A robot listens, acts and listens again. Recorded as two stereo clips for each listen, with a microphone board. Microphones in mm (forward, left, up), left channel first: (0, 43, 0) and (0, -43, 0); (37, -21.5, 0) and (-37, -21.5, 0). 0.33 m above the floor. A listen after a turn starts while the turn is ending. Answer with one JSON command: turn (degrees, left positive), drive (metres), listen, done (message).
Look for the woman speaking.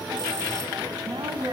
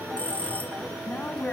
{"turn": -70}
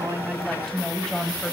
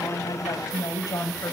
{"turn": 10}
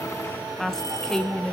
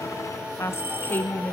{"turn": 20}
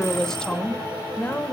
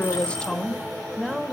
{"turn": 105}
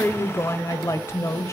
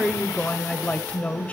{"turn": 60}
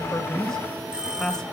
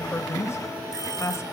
{"turn": 10}
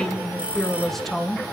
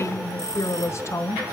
{"done": "Found it: a woman speaking, straight ahead."}